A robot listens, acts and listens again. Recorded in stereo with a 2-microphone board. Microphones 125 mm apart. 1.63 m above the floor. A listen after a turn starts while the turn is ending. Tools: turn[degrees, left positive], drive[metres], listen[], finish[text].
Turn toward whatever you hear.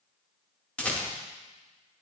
Action: turn[30]
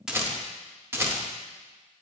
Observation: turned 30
Thought: So it is at 20° right.
Action: turn[-20]
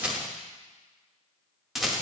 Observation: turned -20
Action: finish[Found it: a rattle, straight ahead.]